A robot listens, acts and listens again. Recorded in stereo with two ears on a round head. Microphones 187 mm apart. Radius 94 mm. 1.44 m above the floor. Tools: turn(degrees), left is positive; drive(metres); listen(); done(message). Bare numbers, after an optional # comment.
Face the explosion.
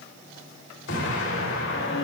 # The explosion: about 65° left or 115° left.
turn(65)
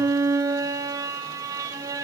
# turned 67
listen()
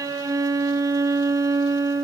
done("I heard an explosion, but can't make it out now. It was about straight ahead or 45° left.")